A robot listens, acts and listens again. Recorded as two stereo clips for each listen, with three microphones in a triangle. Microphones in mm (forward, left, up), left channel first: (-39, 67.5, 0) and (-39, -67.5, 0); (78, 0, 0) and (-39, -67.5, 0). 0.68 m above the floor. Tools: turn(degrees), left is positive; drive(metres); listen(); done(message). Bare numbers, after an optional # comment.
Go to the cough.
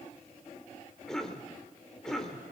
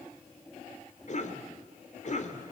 drive(1.0)
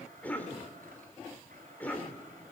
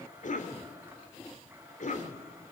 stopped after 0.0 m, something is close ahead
# The cough is now 10° left.
turn(10)
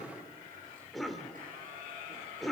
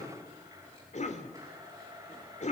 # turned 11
done("Blocked. The cough is further on, straight ahead.")